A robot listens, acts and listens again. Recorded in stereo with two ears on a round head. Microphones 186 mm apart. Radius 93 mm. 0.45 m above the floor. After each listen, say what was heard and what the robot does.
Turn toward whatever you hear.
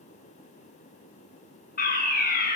The fire alarm: about 45° left or 135° left. Turn 45° left.
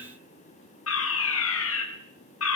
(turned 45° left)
So it is at 85° left. Turn 85° left.
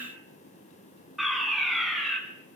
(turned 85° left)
Found it: a fire alarm, straight ahead.